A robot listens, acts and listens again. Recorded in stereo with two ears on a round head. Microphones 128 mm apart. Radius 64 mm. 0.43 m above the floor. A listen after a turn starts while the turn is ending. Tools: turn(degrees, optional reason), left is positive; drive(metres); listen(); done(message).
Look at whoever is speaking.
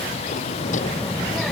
turn(degrees=30)
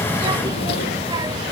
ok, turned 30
turn(degrees=-30, reason="So it is at 30° right.")
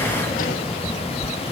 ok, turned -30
done("Facing the child speaking.")